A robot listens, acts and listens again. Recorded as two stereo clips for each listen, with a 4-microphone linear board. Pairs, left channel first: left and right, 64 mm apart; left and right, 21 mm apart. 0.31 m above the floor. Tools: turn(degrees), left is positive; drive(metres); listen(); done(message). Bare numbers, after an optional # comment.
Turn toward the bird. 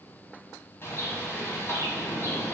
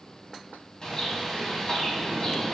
# The bird: about 40° left or 140° left.
turn(40)
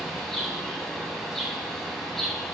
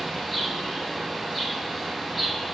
done("Facing the bird.")